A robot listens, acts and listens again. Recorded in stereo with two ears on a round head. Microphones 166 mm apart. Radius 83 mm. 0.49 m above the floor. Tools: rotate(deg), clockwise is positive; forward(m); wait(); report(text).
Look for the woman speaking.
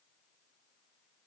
wait()
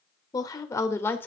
rotate(-30)
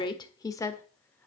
rotate(-15)
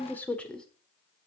rotate(-30)
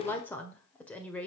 rotate(-30)
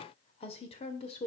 rotate(-145)
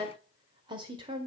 rotate(25)
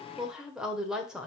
report("Facing the woman speaking.")